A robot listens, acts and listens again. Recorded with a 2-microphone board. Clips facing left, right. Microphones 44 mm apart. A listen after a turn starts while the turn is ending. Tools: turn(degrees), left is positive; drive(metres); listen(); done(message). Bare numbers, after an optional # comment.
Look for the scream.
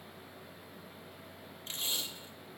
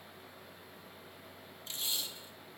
listen()
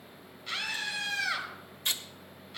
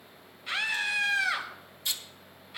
turn(-30)
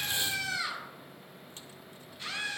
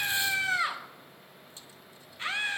# So it is at 135° right.
turn(-135)
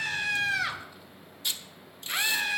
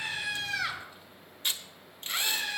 done("Found it: a scream, straight ahead, over 4 m away.")